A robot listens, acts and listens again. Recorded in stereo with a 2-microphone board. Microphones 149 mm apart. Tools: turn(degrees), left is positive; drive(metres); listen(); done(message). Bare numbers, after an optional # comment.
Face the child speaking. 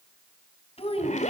# The child speaking: about 40° left or 140° left.
turn(40)
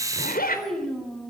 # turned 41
done("Facing the child speaking.")